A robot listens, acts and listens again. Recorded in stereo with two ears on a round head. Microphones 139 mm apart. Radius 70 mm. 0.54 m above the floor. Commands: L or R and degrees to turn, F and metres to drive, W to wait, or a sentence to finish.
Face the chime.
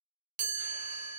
R50
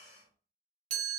R65
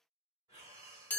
L10
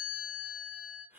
Found it: a chime, straight ahead, under 1 m away.